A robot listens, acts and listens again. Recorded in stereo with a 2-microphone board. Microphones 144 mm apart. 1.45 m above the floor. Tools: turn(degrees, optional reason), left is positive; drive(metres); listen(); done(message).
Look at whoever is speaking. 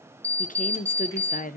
turn(degrees=70, reason="The woman speaking: about 70° left or 110° left.")
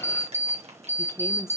turn(degrees=20, reason="So it is at 20° left.")
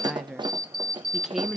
done("Found it: a woman speaking, straight ahead, under 1 m away.")